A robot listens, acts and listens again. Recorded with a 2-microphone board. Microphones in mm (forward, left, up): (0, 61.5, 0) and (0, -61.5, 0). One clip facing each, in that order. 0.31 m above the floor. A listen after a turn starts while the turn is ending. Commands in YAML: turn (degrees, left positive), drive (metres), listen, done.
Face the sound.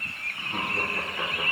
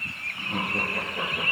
turn: -65
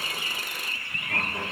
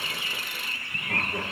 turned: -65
turn: -40
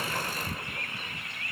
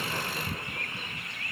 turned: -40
listen: true
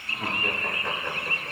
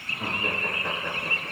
turn: -10
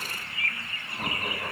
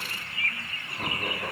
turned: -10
done: "Facing the laughter."